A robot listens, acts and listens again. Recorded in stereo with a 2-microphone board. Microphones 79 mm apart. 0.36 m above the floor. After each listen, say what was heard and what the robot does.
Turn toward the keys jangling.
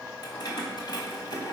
The keys jangling: about 60° left or 120° left. Turn 60° left.
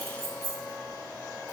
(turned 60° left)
So it is at 50° left. Turn 50° left.
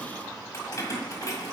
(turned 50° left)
The keys jangling is now 50° left. Turn 50° left.
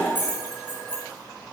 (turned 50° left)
The keys jangling is now 30° left. Turn 30° left.
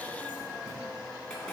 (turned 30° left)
Keep listening.
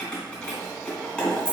The keys jangling is now 15° left. Turn 15° left.
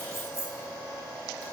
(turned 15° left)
Facing the keys jangling.